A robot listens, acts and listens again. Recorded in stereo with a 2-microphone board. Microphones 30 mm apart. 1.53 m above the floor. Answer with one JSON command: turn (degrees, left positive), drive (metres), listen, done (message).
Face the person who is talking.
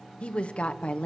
{"turn": 45}
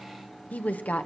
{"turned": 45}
{"turn": 85}
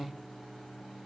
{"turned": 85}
{"turn": 35}
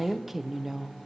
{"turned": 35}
{"turn": -10}
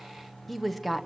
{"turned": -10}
{"done": "Facing the woman speaking."}